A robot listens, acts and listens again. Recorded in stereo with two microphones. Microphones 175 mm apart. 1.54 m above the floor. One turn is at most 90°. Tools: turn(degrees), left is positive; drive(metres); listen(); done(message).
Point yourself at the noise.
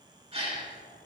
turn(degrees=-35)
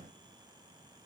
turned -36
listen()
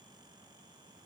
done("I heard a gasp, but can't make it out now. It was about straight ahead or 110° right.")